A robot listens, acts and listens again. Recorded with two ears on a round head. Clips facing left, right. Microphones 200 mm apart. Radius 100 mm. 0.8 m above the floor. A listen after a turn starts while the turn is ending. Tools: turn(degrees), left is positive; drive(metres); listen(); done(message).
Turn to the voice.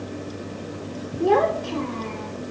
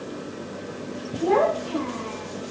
turn(degrees=45)
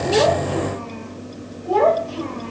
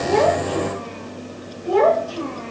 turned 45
turn(degrees=-15)
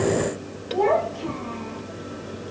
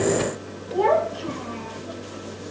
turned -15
turn(degrees=-10)
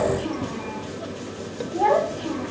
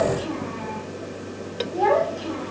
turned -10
done("Found it: a child speaking, straight ahead, 2 to 4 m away.")